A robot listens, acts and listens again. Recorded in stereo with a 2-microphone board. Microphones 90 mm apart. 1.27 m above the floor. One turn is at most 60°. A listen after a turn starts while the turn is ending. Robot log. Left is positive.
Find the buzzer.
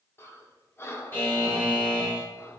note: The buzzer: about 25° left or 155° left.
cmd yaw +25
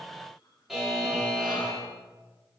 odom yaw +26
end: Found it: a buzzer, straight ahead, 2 to 4 m away.